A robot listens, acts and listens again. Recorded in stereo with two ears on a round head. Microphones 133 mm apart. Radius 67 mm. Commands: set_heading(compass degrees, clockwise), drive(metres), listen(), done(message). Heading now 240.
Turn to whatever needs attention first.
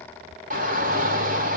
set_heading(300)
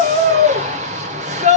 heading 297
set_heading(352)
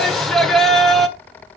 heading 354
done("Found it: a shout, straight ahead.")